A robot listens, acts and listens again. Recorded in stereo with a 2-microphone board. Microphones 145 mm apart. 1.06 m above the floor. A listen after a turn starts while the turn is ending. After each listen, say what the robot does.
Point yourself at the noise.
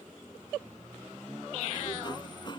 Turn 35° left.
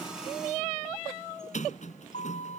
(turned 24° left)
Turn 120° left.
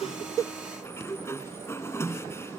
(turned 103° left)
Turn 20° left.
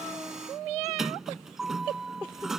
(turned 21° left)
Facing the sliding door.